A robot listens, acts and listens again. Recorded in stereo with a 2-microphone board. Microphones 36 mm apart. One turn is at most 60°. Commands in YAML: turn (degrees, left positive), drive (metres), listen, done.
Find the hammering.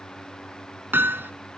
turn: -60
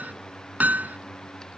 turn: -50
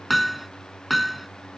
done: "Facing the hammering."